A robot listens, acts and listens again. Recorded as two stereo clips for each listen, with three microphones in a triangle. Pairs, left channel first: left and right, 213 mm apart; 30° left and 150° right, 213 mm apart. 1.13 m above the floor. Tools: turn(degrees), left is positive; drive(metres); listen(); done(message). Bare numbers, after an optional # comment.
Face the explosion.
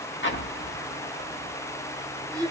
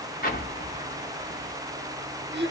# The explosion: 70° left.
turn(70)
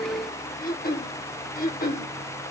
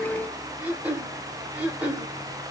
done("Facing where the explosion came from. I can't hear it now.")